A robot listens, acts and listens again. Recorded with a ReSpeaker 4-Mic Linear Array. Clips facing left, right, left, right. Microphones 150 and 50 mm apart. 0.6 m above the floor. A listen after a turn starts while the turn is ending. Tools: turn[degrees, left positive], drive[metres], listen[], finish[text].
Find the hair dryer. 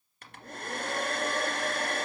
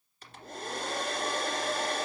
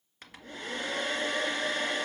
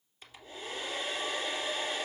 Thought: The hair dryer: about 60° left or 120° left.
Action: turn[60]
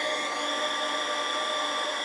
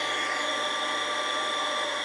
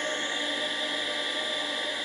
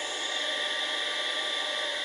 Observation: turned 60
Action: finish[Facing the hair dryer.]